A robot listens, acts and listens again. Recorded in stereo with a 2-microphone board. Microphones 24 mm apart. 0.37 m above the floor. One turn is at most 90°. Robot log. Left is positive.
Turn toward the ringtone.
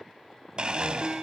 note: The ringtone: about 45° right or 135° right.
cmd yaw -45
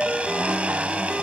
end: Facing the ringtone.